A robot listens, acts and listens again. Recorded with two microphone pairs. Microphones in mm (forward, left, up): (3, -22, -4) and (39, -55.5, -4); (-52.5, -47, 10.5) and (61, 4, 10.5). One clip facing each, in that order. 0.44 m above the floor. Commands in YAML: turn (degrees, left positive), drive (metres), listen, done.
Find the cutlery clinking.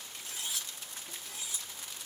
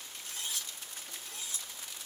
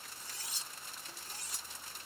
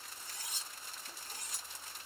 turn: 55
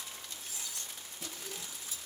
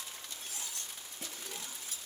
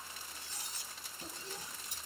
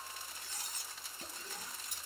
turn: -15
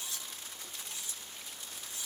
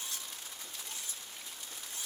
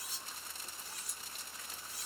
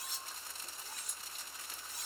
done: "Found it: cutlery clinking, straight ahead."